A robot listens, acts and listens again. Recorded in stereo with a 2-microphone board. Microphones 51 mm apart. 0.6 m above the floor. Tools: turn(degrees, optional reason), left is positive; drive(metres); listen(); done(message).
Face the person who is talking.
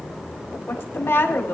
turn(degrees=45, reason="The woman speaking: about 45° left or 135° left.")
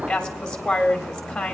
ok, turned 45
turn(degrees=15, reason="So it is at 15° left.")
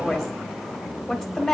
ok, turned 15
done("Found it: a woman speaking, straight ahead.")